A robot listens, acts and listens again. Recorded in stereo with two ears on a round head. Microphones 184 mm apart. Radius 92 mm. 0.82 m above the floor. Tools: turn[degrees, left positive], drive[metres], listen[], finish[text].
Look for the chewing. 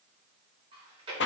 Thought: The chewing: about 30° right or 150° right.
Action: turn[-30]
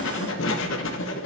Action: listen[]
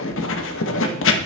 Action: listen[]
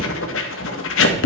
Action: finish[I heard chewing, but can't make it out now. It was about straight ahead or 120° right.]